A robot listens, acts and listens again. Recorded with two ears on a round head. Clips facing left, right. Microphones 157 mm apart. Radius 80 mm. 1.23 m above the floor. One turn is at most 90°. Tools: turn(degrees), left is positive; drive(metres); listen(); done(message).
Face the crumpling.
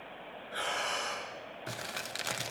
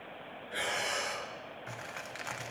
turn(degrees=45)
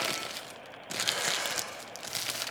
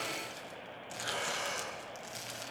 turn(degrees=90)
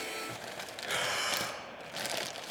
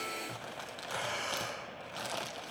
turn(degrees=20)
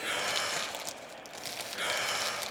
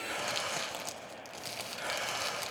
done("Found it: crumpling, straight ahead, under 1 m away.")